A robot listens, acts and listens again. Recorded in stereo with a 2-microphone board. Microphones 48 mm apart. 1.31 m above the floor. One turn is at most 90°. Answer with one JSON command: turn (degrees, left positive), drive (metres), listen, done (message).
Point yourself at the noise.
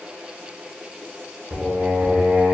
{"turn": -70}
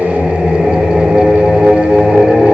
{"turn": -20}
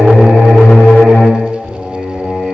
{"done": "Facing the singing, 1 to 2 m away."}